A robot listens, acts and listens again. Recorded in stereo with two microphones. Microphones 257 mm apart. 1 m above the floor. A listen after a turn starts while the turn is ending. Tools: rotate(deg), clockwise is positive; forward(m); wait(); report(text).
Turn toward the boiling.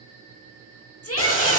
rotate(-50)
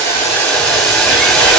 report("Facing the boiling.")